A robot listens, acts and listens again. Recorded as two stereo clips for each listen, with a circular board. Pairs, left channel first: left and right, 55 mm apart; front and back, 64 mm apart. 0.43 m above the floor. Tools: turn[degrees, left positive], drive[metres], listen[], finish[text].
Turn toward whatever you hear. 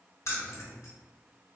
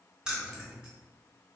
Thought: The keys jangling: 105° left.
Action: turn[105]
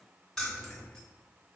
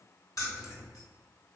Thought: The keys jangling is now 10° left.
Action: turn[10]
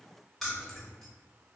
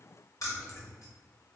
Action: finish[Found it: keys jangling, straight ahead, 1 to 2 m away.]